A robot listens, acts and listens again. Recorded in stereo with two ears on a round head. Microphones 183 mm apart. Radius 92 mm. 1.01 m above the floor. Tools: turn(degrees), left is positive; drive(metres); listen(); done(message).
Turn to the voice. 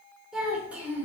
turn(degrees=-30)
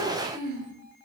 turn(degrees=-130)
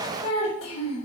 turn(degrees=30)
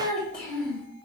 done("Facing the child speaking.")